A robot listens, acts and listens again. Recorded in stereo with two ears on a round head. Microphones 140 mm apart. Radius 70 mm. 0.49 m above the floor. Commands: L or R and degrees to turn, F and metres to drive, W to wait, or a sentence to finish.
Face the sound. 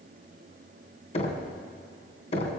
L40
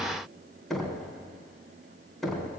Facing the knocking, 2 to 4 m away.